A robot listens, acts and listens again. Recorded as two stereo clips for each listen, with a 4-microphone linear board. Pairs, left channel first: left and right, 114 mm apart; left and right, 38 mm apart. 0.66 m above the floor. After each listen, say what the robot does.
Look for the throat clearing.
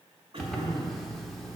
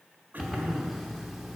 Turn 55° right.
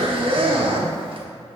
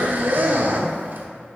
Keep listening.
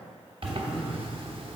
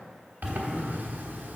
Found it: throat clearing, straight ahead.